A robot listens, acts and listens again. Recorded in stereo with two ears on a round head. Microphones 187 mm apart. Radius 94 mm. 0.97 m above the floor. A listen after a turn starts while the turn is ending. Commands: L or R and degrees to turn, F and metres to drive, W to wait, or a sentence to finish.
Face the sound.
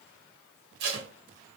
R50
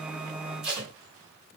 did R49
Found it: tape being pulled, straight ahead.